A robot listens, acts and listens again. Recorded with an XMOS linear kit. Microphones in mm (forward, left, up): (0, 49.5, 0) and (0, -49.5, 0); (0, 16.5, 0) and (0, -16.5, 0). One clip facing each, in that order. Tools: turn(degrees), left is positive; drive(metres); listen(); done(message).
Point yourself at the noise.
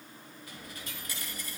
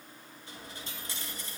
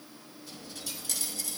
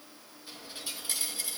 turn(degrees=-25)
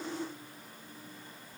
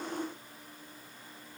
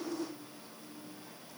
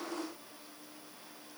listen()
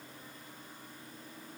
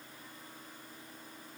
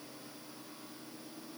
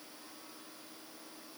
done("I heard a dropped coin, but can't make it out now. It was about straight ahead or 130° right.")